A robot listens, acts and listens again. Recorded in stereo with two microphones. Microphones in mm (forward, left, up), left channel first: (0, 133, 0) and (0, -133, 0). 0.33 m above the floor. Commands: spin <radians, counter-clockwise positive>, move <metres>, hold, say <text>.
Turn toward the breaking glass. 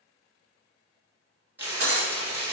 spin -1.05
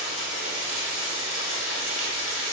hold
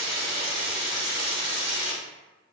say I heard breaking glass, but can't make it out now. It was about straight ahead or 60° right.